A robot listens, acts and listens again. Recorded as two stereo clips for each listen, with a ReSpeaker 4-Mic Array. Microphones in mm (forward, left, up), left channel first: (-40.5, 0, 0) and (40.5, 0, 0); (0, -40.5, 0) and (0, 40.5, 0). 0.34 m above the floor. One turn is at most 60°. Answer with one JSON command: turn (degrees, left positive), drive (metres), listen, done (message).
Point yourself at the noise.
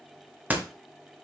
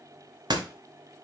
{"turn": 60}
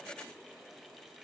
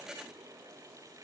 {"done": "Facing where the door slam came from. I can't hear it now."}